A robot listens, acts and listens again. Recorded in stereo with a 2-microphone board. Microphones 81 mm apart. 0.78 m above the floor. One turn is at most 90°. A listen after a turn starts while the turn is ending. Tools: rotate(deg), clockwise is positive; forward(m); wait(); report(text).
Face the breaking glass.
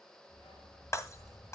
rotate(-40)
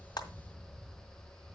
wait()
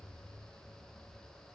report("I heard breaking glass, but can't make it out now. It was about straight ahead or 100° left.")